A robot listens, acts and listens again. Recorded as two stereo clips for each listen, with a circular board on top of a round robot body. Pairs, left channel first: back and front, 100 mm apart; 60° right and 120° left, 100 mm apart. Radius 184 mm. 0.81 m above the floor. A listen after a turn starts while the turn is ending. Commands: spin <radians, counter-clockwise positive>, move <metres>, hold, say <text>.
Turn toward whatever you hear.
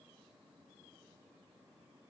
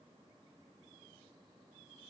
hold
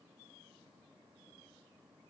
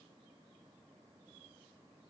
hold
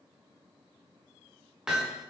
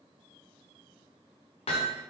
spin -1.48
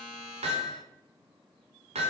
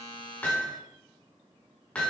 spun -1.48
spin 0.35
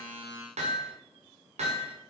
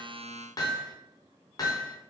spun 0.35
say Found it: hammering, straight ahead, 1 to 2 m away.